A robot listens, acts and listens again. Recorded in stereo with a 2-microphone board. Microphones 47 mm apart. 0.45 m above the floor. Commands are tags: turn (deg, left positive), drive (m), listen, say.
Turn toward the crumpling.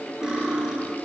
<listen/>
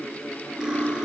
<listen/>
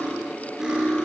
<say>I can't make out crumpling to turn to.</say>